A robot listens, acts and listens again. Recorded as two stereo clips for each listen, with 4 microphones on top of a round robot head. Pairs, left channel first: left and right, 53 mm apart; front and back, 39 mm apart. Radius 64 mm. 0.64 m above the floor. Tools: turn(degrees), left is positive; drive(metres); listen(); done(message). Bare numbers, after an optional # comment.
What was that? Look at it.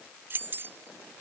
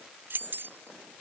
# The keys jangling: 145° right.
turn(-145)
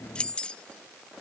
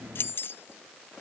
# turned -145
# The keys jangling is now 20° left.
turn(20)
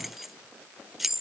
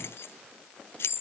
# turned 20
done("Found it: keys jangling, straight ahead.")